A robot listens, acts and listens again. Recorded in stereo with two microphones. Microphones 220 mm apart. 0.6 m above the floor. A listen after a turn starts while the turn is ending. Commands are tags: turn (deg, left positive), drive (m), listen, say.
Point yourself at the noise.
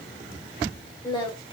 <turn deg="25"/>
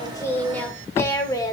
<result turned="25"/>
<turn deg="20"/>
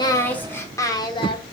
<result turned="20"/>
<turn deg="25"/>
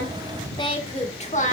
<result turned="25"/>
<turn deg="35"/>
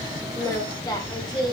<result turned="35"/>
<turn deg="20"/>
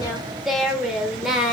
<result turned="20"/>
<say>Found it: singing, straight ahead, 1 to 2 m away.</say>